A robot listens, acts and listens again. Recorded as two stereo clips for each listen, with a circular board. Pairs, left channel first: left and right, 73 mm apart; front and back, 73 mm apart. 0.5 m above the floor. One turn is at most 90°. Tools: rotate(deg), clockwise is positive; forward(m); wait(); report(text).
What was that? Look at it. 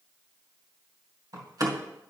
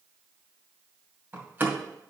rotate(90)
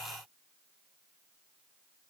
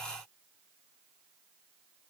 rotate(30)
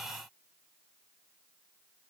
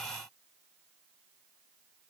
report("I heard a door slam from this way, but can't make it out now.")